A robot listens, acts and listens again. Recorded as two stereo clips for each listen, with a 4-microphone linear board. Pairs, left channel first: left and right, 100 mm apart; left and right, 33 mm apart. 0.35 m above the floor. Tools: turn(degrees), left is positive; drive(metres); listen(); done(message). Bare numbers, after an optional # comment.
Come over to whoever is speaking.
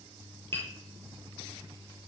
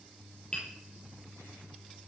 listen()
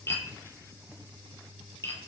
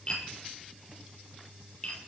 listen()
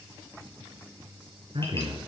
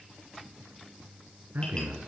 # The man speaking: about 60° right or 120° right.
turn(-60)
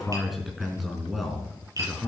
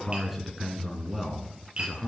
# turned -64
drive(1.0)
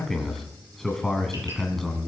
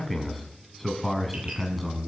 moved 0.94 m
drive(1.0)
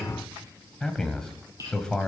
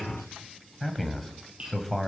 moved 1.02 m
drive(1.0)
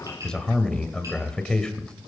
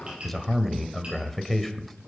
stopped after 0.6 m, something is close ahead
# The man speaking is now 10° left.
turn(10)
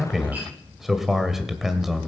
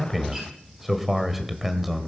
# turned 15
done("I am next to the man speaking.")